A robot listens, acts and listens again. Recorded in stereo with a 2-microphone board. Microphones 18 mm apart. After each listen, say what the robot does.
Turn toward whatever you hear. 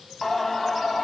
Turn 30° left.
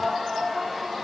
Turn 15° right.
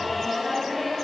Found it: singing, straight ahead, 1 to 2 m away.